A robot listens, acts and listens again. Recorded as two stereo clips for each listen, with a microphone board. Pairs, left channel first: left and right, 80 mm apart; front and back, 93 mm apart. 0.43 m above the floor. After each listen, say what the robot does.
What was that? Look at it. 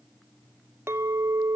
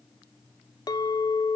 Turn 35° right.
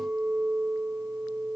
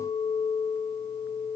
Turn 10° right.
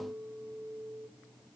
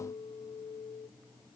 Facing the clink.